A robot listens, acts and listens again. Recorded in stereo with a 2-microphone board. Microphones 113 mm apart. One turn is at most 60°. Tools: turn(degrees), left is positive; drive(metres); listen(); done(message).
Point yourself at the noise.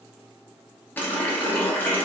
turn(degrees=15)
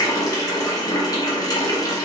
turn(degrees=60)
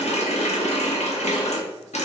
turn(degrees=60)
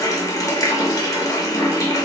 turn(degrees=30)
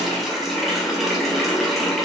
done("Facing the running tap.")